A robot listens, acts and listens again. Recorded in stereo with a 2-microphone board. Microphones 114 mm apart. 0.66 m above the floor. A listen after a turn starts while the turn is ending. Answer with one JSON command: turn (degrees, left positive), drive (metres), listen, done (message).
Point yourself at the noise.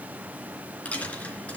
{"turn": 30}
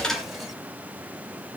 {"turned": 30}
{"listen": true}
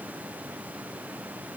{"done": "I heard a dropped coin, but can't make it out now. It was about 20° right or 140° left."}